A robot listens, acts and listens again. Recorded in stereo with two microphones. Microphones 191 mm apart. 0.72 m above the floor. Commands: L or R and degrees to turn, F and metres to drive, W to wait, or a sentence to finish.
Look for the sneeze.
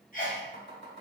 L45
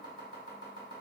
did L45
W
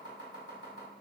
I heard a sneeze, but can't make it out now. It was about straight ahead or 90° left.